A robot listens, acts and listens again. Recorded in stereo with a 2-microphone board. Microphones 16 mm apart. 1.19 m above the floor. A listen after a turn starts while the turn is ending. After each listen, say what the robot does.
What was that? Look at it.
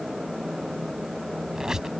Turn 50° right.
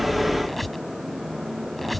Found it: a squeak, straight ahead.